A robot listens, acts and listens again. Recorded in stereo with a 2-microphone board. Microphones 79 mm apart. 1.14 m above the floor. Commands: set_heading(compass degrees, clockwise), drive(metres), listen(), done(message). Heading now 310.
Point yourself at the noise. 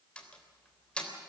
set_heading(280)
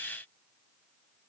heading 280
listen()
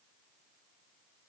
done("I heard a door slam, but can't make it out now. It was about 15° right or 135° left.")